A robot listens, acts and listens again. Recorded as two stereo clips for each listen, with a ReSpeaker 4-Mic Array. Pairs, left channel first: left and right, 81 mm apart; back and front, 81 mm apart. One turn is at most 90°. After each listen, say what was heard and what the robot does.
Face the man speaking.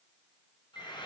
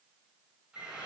Keep listening.
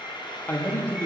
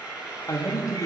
The man speaking: 145° left. Turn 90° left.
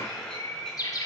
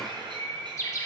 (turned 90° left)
Nothing new. It was at 55° left. Turn 55° left.
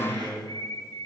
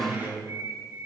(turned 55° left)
Facing the man speaking, 1 to 2 m away.